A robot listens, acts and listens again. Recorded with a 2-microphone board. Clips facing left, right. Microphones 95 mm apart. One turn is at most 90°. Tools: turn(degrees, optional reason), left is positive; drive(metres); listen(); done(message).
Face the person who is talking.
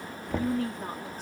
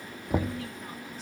turn(degrees=45, reason="The woman speaking: about 45° left or 135° left.")
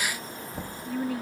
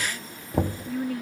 done("Facing the woman speaking.")